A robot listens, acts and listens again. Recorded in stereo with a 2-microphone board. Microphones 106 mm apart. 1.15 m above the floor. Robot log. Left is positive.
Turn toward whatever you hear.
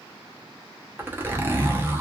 note: The zipper: about 20° right or 160° right.
cmd yaw -20
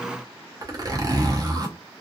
note: So it is at 135° right.
cmd yaw -135
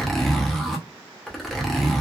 end: Facing the zipper.